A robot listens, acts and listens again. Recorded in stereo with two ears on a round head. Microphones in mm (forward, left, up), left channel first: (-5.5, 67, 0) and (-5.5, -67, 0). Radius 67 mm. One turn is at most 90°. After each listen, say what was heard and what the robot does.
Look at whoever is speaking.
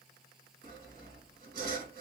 Keep listening.
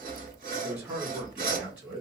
Turn 30° right.
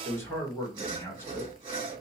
So it is at 25° left. Turn 25° left.
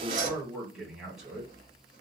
Facing the man speaking, 1 to 2 m away.